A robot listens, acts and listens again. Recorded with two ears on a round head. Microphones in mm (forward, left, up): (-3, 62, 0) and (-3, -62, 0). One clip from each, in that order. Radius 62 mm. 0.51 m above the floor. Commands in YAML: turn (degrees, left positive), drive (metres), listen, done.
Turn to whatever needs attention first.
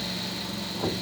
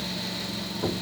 listen: true
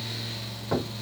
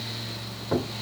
listen: true
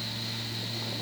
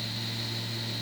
done: "I can't make out anything urgent, only knocking."